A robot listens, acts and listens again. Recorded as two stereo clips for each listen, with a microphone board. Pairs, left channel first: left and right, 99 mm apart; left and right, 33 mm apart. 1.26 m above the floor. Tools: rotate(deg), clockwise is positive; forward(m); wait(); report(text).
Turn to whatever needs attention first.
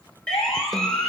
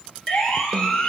rotate(-30)
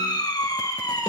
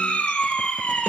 rotate(-140)
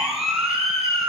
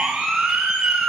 report("Found it: a siren, straight ahead, over 4 m away.")